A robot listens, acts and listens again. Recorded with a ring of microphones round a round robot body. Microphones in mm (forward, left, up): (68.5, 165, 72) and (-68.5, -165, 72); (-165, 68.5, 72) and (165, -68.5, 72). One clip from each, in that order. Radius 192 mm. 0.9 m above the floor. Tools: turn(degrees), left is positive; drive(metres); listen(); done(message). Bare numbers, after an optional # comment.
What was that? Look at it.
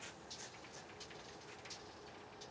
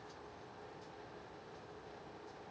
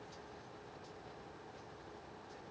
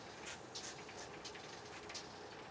listen()
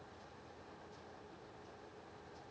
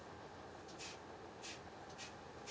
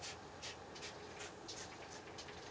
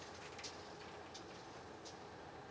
listen()
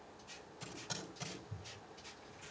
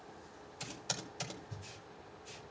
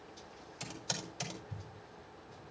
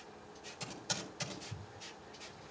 # The typing on a keyboard: 130° right.
turn(-130)
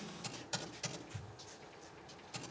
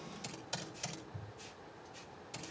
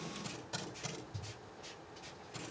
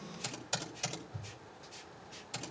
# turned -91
# The typing on a keyboard is now 35° right.
turn(-35)
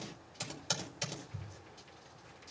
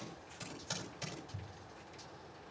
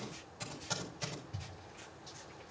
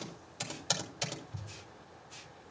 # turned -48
# The typing on a keyboard is now 10° left.
turn(10)
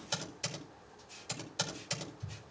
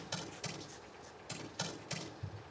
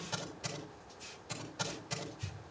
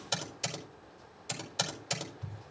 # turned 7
done("Found it: typing on a keyboard, straight ahead.")